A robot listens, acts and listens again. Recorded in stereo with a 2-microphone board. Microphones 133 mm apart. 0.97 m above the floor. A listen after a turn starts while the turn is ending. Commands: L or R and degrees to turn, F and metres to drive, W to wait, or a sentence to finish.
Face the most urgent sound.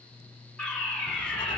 L30
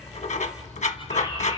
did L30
W
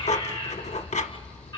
L145
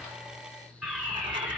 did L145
Facing the fire alarm.